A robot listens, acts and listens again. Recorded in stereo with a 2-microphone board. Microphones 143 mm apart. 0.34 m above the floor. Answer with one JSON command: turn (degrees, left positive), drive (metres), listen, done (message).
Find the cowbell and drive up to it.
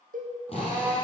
{"turn": -90}
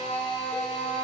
{"listen": true}
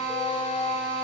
{"listen": true}
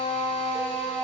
{"done": "I heard a cowbell from this way, but can't make it out now. I did not reach it."}